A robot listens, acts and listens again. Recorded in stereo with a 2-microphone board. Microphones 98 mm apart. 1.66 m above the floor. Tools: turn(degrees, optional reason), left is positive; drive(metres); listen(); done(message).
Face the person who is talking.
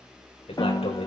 turn(degrees=90)
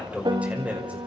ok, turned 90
turn(degrees=-15, reason="So it is at 15° right.")
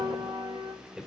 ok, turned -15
done("Found it: a man speaking, straight ahead, over 4 m away.")